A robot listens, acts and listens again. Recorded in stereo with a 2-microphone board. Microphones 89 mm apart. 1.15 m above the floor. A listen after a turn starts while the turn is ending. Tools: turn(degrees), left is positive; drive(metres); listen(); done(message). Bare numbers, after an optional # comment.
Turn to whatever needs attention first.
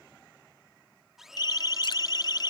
# The siren: about 50° left or 130° left.
turn(50)
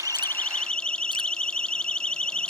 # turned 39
# So it is at 10° left.
turn(10)
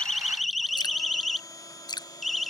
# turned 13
done("Found it: a siren, straight ahead.")